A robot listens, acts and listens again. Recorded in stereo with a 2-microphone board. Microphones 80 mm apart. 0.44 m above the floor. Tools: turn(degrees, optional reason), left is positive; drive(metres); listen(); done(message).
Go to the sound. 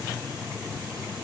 listen()
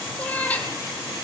turn(degrees=15, reason="The cat meowing: about 15° left or 165° left.")
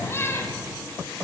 turn(degrees=150, reason="So it is at 150° left.")
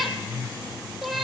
drive(metres=1.0)
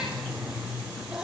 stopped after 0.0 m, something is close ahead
listen()
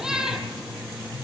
done("Something is in my way. I am facing the cat meowing but have not reached it.")